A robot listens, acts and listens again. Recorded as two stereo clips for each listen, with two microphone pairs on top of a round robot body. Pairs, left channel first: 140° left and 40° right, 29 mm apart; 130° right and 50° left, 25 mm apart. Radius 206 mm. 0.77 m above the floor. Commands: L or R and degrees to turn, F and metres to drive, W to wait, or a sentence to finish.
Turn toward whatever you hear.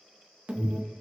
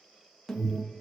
R70
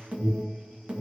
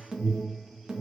R10
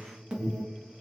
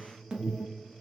Found it: an alarm, straight ahead.